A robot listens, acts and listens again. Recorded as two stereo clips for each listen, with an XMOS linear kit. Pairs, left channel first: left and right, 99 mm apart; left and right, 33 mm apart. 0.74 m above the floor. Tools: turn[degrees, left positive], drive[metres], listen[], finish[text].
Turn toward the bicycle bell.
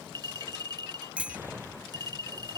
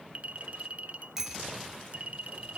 Action: turn[-30]
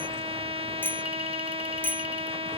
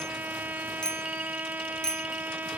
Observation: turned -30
Thought: So it is at 20° left.
Action: turn[20]
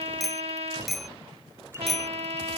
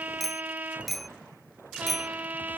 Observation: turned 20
Action: finish[Facing the bicycle bell.]